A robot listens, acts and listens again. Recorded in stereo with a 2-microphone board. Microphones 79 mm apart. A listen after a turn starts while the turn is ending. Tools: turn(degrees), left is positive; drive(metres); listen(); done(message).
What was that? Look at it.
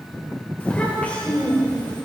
turn(degrees=20)
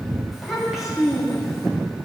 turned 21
done("Facing the child speaking.")